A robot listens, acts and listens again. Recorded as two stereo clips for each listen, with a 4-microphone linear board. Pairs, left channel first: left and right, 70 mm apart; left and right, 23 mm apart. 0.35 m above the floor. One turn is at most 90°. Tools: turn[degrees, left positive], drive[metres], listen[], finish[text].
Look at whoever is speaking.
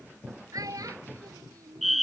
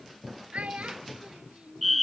Thought: The child speaking: about 55° right or 125° right.
Action: turn[-55]
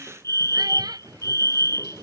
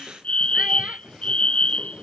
Action: listen[]
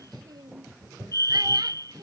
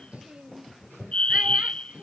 Action: listen[]
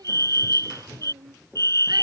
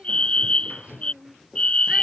Action: finish[I heard a child speaking, but can't make it out now. It was about straight ahead or 70° right.]